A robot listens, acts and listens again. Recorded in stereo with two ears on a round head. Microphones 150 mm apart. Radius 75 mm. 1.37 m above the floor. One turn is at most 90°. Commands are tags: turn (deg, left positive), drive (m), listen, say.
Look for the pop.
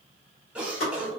<turn deg="90"/>
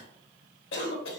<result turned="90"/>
<say>Facing where the pop came from. I can't hear it now.</say>